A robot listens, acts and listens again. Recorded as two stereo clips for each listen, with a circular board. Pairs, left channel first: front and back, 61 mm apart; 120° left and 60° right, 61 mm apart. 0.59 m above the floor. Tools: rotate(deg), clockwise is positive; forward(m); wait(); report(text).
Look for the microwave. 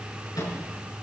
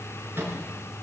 rotate(10)
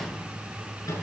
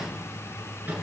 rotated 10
report("Found it: a microwave, straight ahead, over 4 m away.")